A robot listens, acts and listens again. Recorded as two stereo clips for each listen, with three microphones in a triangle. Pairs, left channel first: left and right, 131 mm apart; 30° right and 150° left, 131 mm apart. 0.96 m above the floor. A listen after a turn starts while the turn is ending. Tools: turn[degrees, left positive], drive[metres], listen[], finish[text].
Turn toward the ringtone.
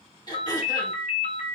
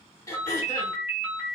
Thought: The ringtone: 70° left.
Action: turn[70]
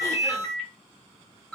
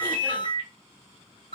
Action: finish[Facing the ringtone, 1 to 2 m away.]